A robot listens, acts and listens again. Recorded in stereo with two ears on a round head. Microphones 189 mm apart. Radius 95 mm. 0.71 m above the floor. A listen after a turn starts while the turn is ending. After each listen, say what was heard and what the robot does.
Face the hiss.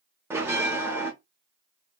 Keep listening.
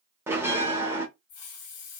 Turn 90° left.
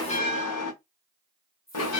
So it is at 10° left. Turn 10° left.
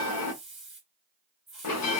Found it: a hiss, straight ahead.